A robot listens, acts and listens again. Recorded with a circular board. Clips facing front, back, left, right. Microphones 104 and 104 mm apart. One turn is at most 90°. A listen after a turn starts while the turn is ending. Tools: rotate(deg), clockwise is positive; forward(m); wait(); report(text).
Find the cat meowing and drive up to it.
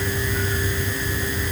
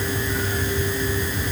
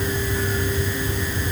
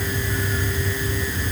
wait()
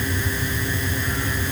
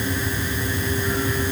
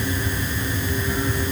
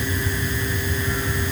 wait()
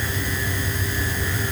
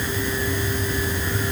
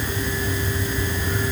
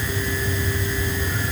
report("I can't make out a cat meowing.")